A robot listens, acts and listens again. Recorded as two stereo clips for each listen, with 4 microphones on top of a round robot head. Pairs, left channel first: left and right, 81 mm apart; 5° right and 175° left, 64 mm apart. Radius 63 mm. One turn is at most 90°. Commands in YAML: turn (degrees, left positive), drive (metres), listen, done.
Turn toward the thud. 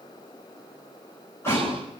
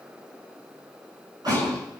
turn: 90
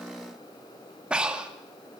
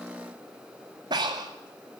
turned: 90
turn: 60
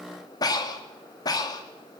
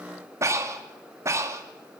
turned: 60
done: "Facing where the thud came from. I can't hear it now."